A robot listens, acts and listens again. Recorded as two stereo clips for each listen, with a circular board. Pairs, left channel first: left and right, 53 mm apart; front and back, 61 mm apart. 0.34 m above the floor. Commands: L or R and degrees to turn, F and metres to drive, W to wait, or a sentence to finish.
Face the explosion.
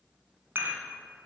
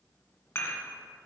W
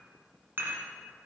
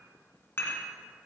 W
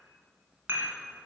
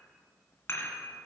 I can't make out an explosion to turn to.